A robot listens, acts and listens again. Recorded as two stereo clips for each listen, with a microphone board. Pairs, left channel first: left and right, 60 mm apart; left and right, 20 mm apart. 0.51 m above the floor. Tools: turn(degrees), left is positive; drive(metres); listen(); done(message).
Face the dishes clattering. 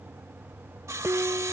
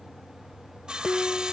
turn(degrees=-35)
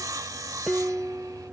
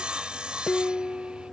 done("Facing the dishes clattering.")